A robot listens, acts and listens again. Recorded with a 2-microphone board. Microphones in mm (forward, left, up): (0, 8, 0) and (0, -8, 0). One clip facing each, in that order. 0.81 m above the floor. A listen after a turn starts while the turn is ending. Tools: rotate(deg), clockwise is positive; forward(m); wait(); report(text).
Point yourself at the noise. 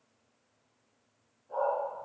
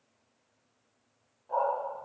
rotate(60)
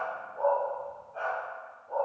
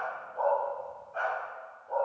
rotate(20)
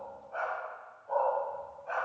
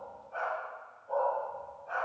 rotate(-20)
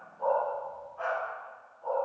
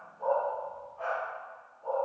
rotate(-20)
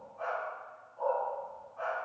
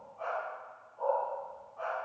report("Facing the dog barking, 2 to 4 m away.")